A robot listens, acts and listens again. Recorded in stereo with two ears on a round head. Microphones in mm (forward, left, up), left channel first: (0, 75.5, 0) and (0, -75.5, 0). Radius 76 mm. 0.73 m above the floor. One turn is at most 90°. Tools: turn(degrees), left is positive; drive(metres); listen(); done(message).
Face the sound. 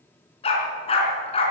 turn(degrees=35)
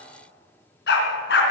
turn(degrees=90)
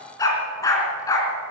turn(degrees=20)
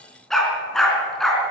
done("Facing the dog barking, 2 to 4 m away.")